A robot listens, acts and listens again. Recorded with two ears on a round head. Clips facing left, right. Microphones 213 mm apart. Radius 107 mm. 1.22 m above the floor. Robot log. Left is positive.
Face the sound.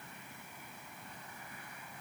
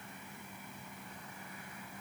cmd idle
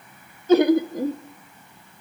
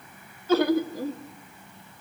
note: The laughter: about 15° left or 165° left.
cmd yaw +15
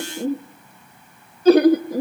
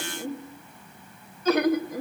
note: So it is at 150° left.
cmd yaw +150
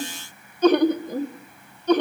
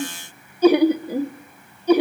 note: The laughter is now 10° right.
cmd yaw -10
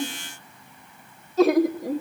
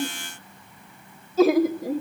end: Facing the laughter, 1 to 2 m away.